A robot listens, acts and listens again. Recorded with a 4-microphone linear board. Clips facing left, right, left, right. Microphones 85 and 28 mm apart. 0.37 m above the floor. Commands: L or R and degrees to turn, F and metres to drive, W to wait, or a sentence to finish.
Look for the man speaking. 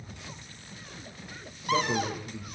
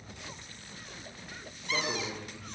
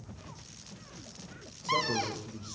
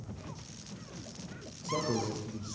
L30
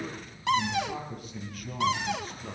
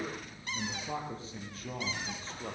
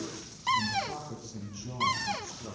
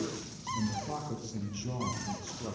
R30
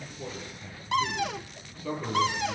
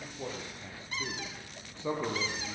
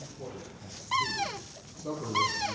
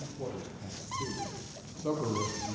R25
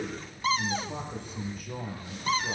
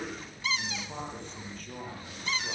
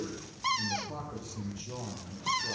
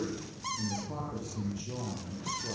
Facing the man speaking, over 4 m away.